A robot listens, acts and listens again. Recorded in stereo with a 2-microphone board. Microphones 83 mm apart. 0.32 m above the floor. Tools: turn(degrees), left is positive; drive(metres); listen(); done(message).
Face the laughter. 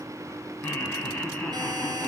turn(degrees=30)
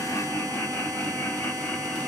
turn(degrees=20)
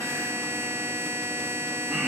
turn(degrees=-30)
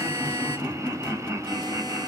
turn(degrees=-145)
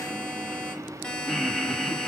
done("Facing the laughter.")